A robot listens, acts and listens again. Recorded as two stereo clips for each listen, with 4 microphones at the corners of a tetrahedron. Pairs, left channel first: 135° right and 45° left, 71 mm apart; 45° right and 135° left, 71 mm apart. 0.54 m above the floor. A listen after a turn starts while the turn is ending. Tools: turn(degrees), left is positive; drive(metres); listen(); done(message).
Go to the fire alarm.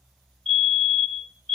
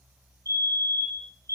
turn(degrees=140)
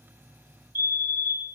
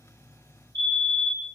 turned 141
drive(metres=1.0)
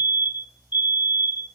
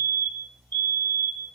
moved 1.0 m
drive(metres=1.0)
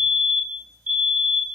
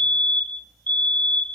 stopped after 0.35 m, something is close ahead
done("I am next to the fire alarm.")